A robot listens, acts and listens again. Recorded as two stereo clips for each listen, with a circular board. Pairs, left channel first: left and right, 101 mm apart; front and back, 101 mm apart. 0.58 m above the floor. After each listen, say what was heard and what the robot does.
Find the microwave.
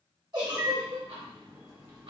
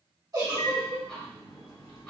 The microwave: 40° right. Turn 40° right.
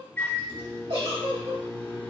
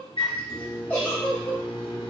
The microwave is now 20° left. Turn 20° left.
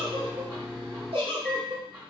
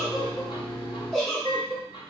Facing the microwave, 1 to 2 m away.